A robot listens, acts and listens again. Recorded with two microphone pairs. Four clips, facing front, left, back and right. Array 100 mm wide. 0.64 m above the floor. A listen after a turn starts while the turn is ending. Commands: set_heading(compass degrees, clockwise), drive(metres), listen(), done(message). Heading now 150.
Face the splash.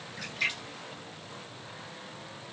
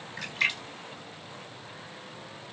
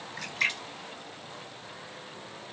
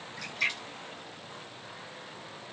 set_heading(10)
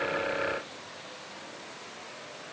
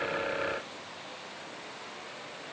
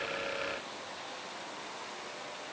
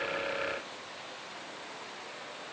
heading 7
done("I heard a splash from this way, but can't make it out now.")